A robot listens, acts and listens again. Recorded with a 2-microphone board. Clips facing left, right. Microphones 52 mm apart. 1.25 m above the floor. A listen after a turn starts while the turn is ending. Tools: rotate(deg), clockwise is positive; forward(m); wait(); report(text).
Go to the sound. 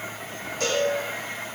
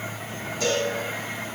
rotate(-55)
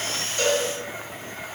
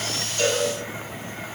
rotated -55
rotate(-15)
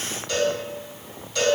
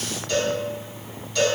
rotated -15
forward(1.0)
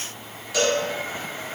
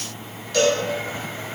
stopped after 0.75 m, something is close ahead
rotate(-10)
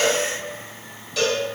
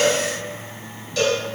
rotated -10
report("I am next to the cowbell.")